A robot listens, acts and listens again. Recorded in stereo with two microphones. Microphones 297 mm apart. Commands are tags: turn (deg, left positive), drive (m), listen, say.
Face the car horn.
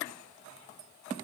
<listen/>
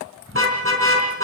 <turn deg="-45"/>
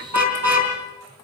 <turn deg="-85"/>
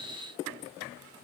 <listen/>
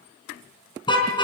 <turn deg="15"/>
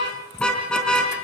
<say>Found it: a car horn, straight ahead.</say>